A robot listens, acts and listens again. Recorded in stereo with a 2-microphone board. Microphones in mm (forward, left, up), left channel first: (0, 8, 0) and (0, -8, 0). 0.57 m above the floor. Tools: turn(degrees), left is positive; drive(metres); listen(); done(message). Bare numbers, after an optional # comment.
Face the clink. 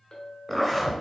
# The clink: about 30° left or 150° left.
turn(30)
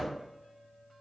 done("Found it: a clink, straight ahead, 1 to 2 m away.")